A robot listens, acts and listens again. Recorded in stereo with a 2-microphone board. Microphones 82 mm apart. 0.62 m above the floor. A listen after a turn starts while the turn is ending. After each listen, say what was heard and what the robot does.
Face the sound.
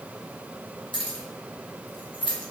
The keys jangling: about 70° left or 110° left. Turn 70° left.
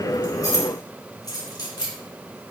So it is at 55° left. Turn 55° left.
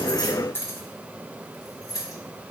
The keys jangling is now 45° left. Turn 45° left.
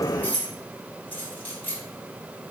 The keys jangling is now 20° left. Turn 20° left.
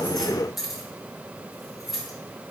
Facing the keys jangling.